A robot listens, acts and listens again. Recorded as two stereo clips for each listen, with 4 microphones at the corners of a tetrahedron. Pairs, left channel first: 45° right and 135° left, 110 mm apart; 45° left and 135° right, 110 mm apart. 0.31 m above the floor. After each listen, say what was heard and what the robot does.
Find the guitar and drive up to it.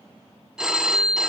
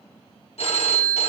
Keep listening.
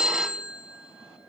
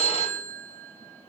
Keep listening.
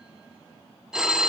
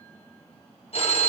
I can't make out a guitar to turn to.